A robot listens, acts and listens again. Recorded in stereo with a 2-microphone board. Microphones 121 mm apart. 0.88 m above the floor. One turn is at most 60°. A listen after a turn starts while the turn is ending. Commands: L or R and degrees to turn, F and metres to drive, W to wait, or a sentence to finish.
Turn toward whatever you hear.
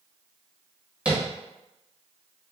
R30
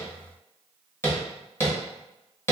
L25
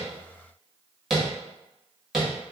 Facing the tapping.